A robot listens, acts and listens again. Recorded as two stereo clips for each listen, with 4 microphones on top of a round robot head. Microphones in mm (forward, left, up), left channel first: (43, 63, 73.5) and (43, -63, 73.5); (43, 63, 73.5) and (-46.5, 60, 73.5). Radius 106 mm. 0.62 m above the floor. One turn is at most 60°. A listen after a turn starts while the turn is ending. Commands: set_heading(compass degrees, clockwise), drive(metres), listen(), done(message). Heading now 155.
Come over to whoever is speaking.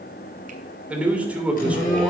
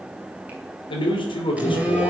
set_heading(165)
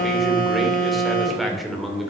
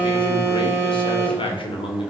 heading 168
drive(1.0)
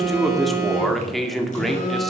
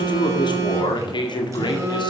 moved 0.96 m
drive(1.0)
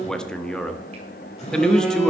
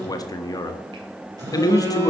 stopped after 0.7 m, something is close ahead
set_heading(158)
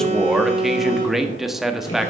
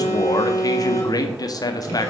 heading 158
done("I am next to the man speaking.")